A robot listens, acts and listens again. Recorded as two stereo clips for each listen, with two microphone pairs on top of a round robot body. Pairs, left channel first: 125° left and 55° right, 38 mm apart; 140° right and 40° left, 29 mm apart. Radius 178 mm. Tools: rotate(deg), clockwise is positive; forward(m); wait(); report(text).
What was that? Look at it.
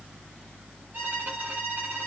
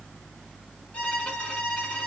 rotate(90)
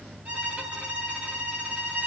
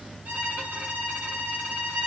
report("Facing the violin.")